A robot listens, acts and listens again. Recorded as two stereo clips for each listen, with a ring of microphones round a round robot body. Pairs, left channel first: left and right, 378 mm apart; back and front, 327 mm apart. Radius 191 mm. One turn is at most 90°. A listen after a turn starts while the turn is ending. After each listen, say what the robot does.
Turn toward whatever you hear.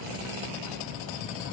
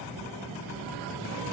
Keep listening.
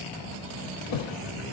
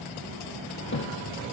Turn 90° left.
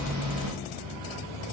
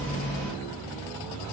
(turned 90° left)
Turn 35° left.
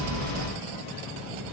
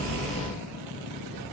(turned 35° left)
Facing where the thud came from. I can't hear it now.